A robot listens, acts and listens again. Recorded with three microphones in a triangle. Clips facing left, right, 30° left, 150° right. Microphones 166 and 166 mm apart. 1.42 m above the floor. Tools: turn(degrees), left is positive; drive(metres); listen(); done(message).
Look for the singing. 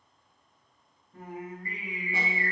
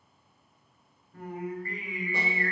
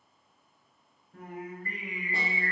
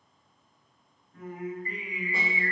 turn(degrees=20)
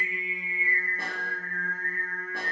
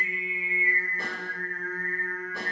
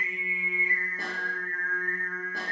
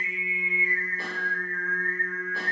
done("Facing the singing, 1 to 2 m away.")